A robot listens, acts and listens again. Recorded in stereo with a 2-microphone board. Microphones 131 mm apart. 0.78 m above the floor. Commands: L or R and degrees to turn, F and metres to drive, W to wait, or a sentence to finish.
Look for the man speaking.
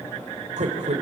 R65
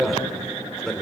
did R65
Facing the man speaking, 2 to 4 m away.